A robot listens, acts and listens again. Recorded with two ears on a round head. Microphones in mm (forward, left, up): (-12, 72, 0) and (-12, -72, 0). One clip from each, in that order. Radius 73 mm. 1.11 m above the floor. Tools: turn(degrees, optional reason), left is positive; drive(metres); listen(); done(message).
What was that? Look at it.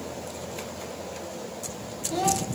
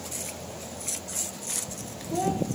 turn(degrees=90)
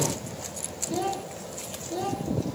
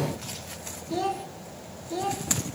done("Facing the child speaking, 1 to 2 m away.")